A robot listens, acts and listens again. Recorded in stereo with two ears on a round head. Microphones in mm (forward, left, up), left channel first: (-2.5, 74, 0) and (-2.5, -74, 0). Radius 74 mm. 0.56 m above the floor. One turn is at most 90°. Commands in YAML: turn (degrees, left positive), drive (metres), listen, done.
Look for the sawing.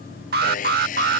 turn: 50
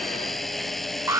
done: "Found it: sawing, straight ahead."